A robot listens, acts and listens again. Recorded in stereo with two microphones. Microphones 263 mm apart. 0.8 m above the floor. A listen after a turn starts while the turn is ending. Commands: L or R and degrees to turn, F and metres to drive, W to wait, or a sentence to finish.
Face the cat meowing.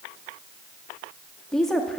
W
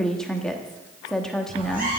R35
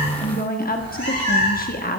R105
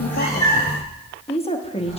L20
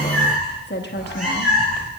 Facing the cat meowing, over 4 m away.